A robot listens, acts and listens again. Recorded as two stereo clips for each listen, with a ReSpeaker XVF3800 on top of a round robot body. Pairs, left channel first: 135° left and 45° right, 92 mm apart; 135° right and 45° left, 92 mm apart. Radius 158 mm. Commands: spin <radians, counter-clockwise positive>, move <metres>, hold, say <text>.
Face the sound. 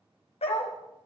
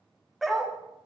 spin 2.36
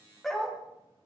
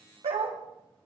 spin 0.87
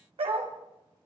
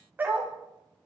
spin -0.44
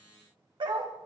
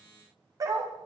spin -0.17
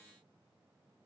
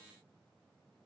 hold
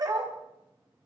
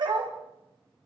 say Facing the dog barking.